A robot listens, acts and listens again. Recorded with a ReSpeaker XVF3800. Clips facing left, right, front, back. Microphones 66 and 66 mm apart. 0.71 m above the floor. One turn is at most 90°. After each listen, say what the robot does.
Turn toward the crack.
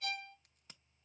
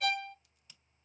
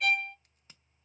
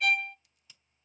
Turn 45° left.
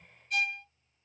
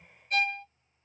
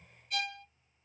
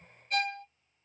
I heard a crack from this way, but can't make it out now.